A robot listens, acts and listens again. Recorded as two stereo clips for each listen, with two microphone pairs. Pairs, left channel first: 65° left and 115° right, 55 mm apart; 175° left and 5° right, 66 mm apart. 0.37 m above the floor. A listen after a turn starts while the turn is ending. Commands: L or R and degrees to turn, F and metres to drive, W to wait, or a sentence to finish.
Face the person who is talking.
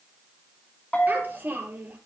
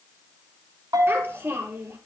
R60
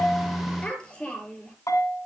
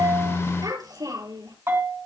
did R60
R10
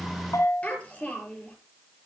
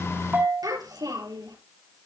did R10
Facing the child speaking, over 4 m away.